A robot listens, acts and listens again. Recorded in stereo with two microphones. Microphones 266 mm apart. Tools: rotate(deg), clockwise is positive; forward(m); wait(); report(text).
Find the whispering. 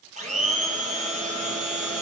wait()
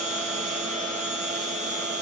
wait()
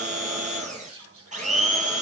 rotate(55)
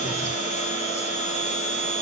wait()
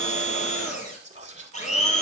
rotate(30)
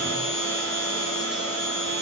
wait()
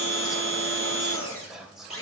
report("Found it: whispering, straight ahead.")